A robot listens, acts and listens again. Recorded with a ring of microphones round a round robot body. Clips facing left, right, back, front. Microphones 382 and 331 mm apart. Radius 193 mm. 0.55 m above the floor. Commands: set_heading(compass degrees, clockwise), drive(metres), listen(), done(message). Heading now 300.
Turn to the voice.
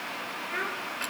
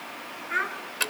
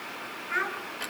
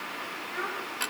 set_heading(80)
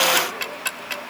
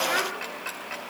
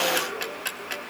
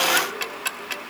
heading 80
listen()
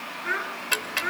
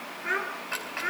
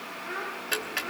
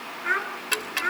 done("Found it: a child speaking, straight ahead.")